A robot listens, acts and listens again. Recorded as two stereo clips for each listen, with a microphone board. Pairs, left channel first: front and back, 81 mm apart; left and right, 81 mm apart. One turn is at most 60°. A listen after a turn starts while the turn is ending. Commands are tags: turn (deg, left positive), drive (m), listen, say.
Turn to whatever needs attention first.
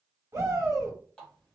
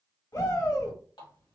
<turn deg="60"/>
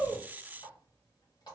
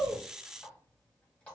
<turn deg="60"/>
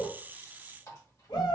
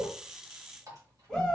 <say>Facing the shout, 1 to 2 m away.</say>